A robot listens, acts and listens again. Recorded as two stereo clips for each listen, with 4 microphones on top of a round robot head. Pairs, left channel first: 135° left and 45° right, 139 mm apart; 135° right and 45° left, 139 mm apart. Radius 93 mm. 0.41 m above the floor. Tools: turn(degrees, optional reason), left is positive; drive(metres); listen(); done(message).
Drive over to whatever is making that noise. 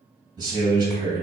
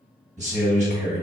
turn(degrees=15, reason="The man speaking: 15° left.")
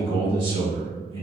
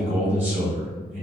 drive(metres=1.0)
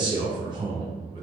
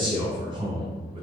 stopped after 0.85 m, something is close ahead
done("I am next to the man speaking.")